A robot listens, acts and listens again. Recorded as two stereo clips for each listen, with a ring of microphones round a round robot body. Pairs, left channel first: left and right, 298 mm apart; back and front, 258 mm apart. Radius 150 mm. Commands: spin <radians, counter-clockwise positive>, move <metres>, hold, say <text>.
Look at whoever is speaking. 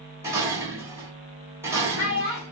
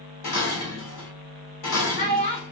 spin 2.36
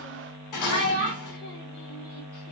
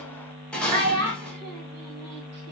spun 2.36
spin 0.70
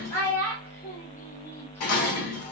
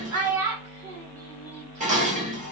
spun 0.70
spin 0.17
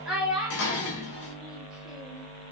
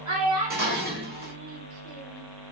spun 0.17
say Facing the child speaking.